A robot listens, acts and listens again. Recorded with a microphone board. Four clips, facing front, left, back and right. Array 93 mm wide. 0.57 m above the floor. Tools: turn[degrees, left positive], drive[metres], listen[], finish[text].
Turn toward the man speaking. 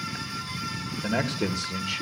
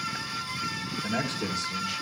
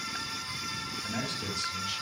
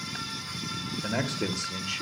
Thought: The man speaking: 20° right.
Action: turn[-20]
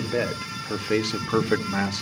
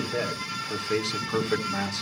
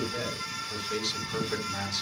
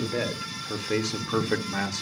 Thought: The man speaking is now 20° right.
Action: turn[-20]
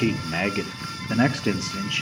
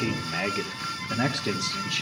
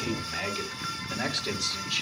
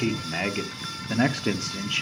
Thought: The man speaking is now 40° right.
Action: turn[-40]
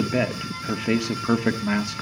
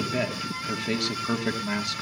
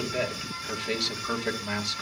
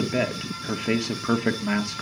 Thought: The man speaking is now 35° right.
Action: turn[-35]
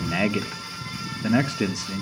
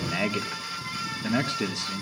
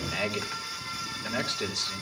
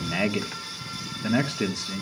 Thought: The man speaking is now 15° right.
Action: turn[-15]
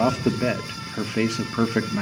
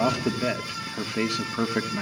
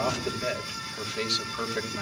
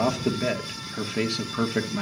Action: finish[Found it: a man speaking, straight ahead, 1 to 2 m away.]